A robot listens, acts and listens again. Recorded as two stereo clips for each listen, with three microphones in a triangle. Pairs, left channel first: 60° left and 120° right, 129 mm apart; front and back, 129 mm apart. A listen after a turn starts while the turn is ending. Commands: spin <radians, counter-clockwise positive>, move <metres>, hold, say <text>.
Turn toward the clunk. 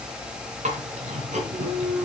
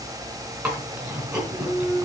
spin -1.22
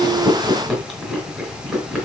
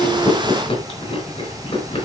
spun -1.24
say I heard a clunk from this way, but can't make it out now.